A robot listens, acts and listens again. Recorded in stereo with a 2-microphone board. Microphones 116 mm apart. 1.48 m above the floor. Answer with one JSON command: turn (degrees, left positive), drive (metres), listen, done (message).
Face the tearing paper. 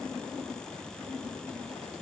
{"listen": true}
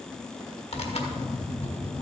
{"turn": 65}
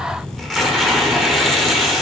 {"done": "Found it: tearing paper, straight ahead, 1 to 2 m away."}